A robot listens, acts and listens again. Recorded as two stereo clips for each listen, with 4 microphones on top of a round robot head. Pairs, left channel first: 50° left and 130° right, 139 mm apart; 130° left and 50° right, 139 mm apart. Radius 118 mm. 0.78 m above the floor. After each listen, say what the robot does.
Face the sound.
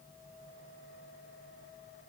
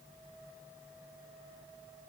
Keep listening.
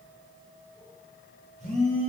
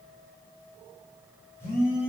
Turn 160° right.
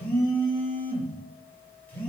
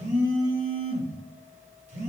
Turn 30° right.
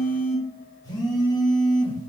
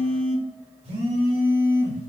Turn 10° right.
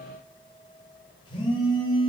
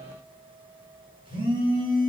Found it: a phone buzzing, straight ahead, 1 to 2 m away.